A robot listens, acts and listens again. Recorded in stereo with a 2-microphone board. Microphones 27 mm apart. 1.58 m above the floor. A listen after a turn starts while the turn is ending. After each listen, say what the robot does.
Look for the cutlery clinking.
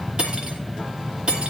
Turn 40° right.
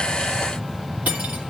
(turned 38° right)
Turn 100° right.
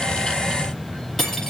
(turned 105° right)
Facing the cutlery clinking, 2 to 4 m away.